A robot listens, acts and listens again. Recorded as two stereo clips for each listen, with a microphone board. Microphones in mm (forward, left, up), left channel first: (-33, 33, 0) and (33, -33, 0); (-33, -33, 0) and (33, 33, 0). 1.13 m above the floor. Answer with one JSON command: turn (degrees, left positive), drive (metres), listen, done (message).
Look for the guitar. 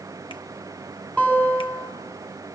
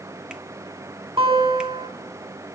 {"turn": 60}
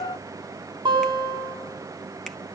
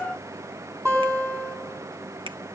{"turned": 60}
{"turn": -15}
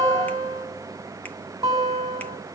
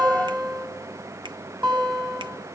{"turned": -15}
{"done": "Found it: a guitar, straight ahead, over 4 m away."}